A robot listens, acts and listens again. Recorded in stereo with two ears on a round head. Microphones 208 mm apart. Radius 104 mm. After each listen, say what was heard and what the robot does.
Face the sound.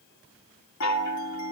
The chime: about 65° left or 115° left. Turn 65° left.
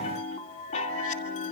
So it is at 35° left. Turn 35° left.
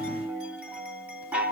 Found it: a chime, straight ahead, 2 to 4 m away.